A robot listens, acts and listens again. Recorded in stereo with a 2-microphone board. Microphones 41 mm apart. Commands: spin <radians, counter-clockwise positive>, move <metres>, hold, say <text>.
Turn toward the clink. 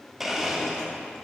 hold
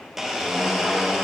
hold
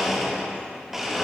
say I can't make out a clink to turn to.